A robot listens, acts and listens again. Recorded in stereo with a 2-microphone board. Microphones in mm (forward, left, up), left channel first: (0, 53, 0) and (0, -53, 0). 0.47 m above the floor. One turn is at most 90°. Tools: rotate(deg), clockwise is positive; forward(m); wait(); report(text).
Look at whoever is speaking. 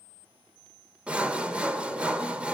wait()
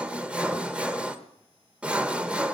wait()
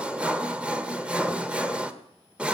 report("I can't make out anyone speaking, only sawing.")